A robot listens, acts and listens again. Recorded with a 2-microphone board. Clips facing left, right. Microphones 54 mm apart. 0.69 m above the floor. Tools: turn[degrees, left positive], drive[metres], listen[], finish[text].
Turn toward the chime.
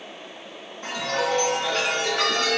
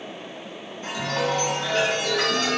Thought: The chime: about 55° left or 125° left.
Action: turn[55]
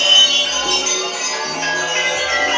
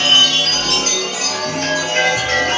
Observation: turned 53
Thought: So it is at 15° left.
Action: turn[15]
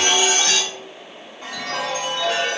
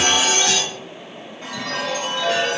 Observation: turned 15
Action: finish[Facing the chime.]